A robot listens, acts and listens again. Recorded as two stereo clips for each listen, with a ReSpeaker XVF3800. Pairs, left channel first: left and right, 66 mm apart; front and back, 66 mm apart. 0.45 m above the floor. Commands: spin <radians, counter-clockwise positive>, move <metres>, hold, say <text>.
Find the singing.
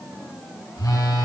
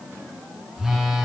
hold
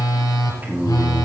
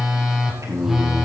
spin -2.62
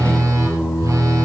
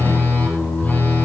spin 0.79
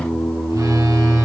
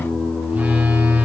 say Found it: singing, straight ahead.